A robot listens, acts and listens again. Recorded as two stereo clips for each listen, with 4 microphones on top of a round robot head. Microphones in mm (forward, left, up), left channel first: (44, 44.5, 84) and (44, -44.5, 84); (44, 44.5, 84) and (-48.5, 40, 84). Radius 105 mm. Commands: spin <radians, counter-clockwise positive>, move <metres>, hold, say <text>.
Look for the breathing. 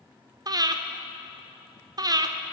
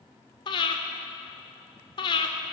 spin -0.79
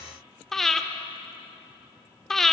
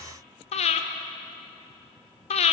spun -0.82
say Found it: breathing, straight ahead.